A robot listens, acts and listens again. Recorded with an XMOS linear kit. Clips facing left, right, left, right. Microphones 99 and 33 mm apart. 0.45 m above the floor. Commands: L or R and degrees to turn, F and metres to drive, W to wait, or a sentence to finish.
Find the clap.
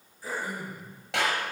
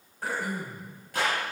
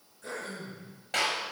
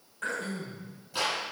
L90
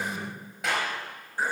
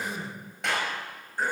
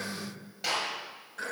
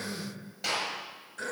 Found it: a clap, straight ahead, over 4 m away.